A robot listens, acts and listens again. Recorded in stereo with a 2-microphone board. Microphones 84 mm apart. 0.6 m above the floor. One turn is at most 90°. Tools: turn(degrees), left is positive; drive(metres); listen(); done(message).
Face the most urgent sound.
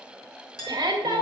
turn(degrees=-55)
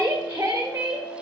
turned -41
turn(degrees=-30)
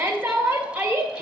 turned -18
turn(degrees=-15)
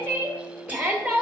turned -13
done("Facing the shout, 1 to 2 m away.")